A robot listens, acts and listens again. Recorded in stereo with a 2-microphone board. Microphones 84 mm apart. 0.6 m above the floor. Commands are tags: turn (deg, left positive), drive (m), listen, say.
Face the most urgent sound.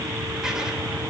<listen/>
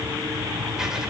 <listen/>
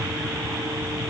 <say>I can't make out anything urgent to turn to.</say>